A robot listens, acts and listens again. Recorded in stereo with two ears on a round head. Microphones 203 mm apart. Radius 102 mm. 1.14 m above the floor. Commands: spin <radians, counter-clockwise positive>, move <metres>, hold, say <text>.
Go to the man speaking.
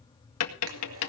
hold
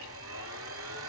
hold
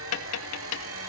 say I can't make out a man speaking to turn to.